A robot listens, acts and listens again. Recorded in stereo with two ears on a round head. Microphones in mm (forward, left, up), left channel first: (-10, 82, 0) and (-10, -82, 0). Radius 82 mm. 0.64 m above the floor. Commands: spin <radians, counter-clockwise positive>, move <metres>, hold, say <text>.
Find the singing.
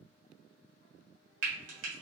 hold
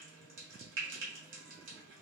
hold
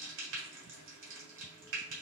say I can't make out singing, only frying.